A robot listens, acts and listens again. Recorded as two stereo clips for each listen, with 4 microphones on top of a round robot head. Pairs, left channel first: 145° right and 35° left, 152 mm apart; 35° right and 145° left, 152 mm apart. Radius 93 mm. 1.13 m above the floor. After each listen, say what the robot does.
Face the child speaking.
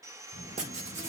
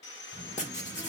Turn 95° right.
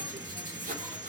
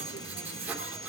Turn 25° right.
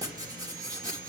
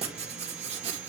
Turn 10° left.
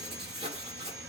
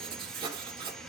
Facing the child speaking, over 4 m away.